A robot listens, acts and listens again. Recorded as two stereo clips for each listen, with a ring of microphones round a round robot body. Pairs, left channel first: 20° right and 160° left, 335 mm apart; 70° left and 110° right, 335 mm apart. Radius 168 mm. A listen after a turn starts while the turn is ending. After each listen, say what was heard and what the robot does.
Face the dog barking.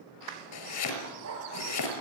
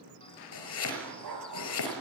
The dog barking: 155° right. Turn 155° right.
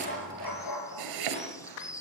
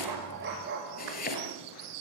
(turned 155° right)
The dog barking is now 55° right. Turn 55° right.
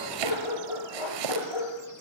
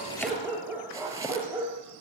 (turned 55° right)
The dog barking is now 30° right. Turn 30° right.
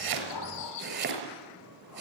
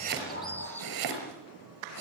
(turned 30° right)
Keep listening.
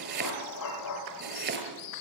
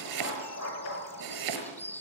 The dog barking is now 20° left. Turn 20° left.
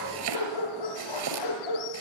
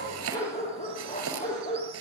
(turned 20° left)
Found it: a dog barking, straight ahead, over 4 m away.